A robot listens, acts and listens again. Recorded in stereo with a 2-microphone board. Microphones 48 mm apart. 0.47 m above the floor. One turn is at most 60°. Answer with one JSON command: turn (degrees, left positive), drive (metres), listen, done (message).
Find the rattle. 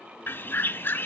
{"listen": true}
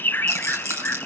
{"turn": -60}
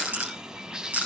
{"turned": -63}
{"turn": -35}
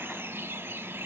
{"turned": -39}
{"listen": true}
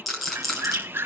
{"done": "Found it: a rattle, straight ahead."}